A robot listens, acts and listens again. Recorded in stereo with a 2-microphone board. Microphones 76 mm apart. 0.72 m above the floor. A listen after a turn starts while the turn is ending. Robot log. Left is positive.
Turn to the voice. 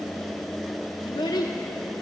note: The child speaking: about 65° left or 115° left.
cmd yaw +65
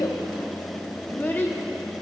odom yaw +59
note: So it is at 25° left.
cmd yaw +25
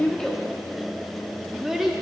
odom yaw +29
end: Found it: a child speaking, straight ahead, under 1 m away.